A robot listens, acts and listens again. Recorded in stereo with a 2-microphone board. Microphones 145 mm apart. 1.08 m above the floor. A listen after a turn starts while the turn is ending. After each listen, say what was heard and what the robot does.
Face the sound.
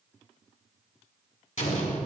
The explosion: about 55° left or 125° left. Turn 55° left.
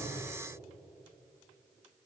Keep listening.
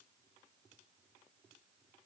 I heard an explosion, but can't make it out now. It was about straight ahead or 70° left.